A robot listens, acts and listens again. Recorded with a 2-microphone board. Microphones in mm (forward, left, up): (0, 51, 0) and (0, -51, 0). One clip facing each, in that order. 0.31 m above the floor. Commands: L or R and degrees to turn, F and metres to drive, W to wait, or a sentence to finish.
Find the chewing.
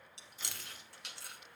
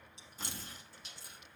L70
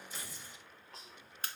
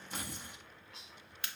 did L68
L40
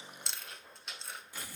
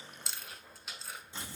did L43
Facing the chewing.